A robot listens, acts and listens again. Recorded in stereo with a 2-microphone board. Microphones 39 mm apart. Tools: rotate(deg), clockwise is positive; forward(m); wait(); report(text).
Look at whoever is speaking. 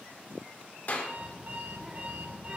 rotate(25)
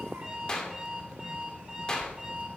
rotate(130)
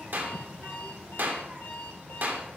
rotate(35)
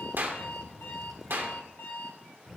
report("Facing the child speaking, 1 to 2 m away.")